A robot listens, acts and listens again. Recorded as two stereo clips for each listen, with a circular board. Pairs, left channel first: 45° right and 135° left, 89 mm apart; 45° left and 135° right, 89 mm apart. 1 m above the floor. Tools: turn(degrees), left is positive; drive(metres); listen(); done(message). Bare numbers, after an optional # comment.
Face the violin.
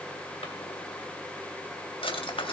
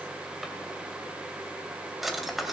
listen()
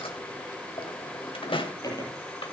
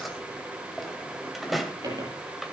listen()
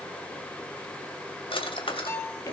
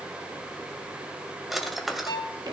# The violin: 15° left.
turn(15)
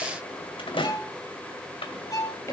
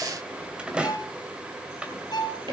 done("Facing the violin.")